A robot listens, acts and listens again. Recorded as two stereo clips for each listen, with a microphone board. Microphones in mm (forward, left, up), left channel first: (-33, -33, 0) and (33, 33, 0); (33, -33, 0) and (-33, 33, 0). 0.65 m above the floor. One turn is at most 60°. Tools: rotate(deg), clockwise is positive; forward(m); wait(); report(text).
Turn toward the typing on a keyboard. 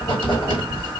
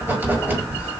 wait()
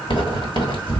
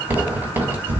wait()
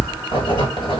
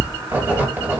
report("I can't make out typing on a keyboard, only writing.")